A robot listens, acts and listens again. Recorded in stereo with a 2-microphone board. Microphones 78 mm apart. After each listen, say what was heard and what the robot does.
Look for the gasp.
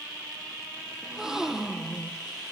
Turn 30° right.
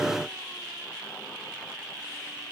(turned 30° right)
Keep listening.
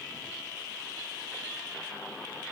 I heard a gasp, but can't make it out now. It was about 25° left or 145° right.